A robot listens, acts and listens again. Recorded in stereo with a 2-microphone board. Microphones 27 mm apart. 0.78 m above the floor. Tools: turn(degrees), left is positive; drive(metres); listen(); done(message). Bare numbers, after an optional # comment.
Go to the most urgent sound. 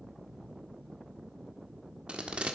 listen()
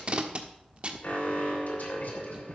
# The alarm: about 70° left or 110° left.
turn(70)
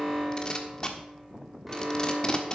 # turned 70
drive(1.0)
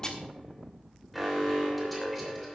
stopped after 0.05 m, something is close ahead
done("Something is in my way. I am facing the alarm but have not reached it.")